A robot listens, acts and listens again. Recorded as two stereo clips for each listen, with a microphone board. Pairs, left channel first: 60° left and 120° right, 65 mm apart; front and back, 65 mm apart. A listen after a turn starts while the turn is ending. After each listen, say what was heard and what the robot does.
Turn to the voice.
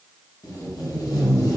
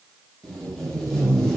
Keep listening.
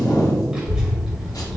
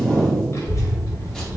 The child speaking: 30° right. Turn 30° right.
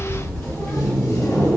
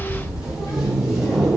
Facing the child speaking, 1 to 2 m away.